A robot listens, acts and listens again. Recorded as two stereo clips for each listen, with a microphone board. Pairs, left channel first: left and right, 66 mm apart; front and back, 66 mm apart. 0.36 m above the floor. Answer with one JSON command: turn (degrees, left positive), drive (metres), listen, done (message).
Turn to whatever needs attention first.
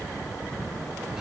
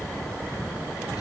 {"listen": true}
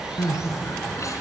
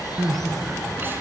{"turn": 125}
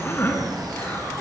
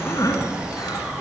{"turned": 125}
{"turn": 30}
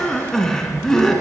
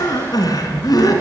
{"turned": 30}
{"done": "Found it: crying, straight ahead, 2 to 4 m away."}